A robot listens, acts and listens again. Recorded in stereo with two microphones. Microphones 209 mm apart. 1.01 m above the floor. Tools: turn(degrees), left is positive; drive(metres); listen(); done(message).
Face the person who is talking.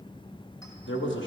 turn(degrees=65)
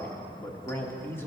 turn(degrees=10)
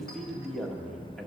done("Facing the man speaking.")